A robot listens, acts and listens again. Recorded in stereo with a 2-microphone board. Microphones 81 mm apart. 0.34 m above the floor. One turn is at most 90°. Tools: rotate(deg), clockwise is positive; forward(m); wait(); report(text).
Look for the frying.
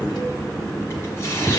wait()
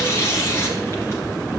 wait()
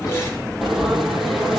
rotate(-30)
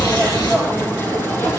rotate(-90)
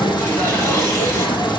rotate(-70)
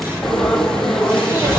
report("Found it: frying, straight ahead.")